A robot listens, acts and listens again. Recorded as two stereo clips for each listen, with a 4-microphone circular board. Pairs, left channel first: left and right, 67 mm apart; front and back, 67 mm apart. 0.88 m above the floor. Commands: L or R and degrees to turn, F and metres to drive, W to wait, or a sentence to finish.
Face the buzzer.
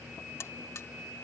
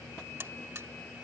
L130
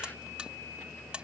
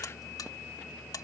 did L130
R15
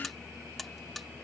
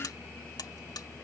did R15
Found it: a buzzer, straight ahead.